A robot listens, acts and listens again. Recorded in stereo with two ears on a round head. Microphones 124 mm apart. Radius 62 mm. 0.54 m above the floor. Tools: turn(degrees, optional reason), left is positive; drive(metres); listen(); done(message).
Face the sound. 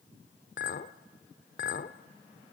turn(degrees=65, reason="The clink: about 65° left or 115° left.")
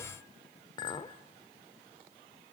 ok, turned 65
turn(degrees=35, reason="So it is at 35° left.")
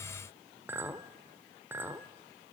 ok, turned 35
turn(degrees=-15, reason="The clink is now 15° right.")
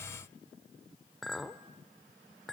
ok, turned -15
done("Found it: a clink, straight ahead, 1 to 2 m away.")